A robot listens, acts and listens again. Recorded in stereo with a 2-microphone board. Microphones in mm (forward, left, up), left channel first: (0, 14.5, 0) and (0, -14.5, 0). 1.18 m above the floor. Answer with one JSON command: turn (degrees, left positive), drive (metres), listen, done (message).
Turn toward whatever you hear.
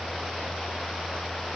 {"listen": true}
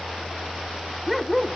{"turn": 30}
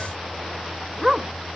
{"turn": -20}
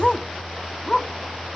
{"turn": 15}
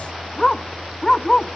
{"turn": 15}
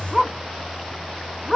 {"done": "Facing the dog barking."}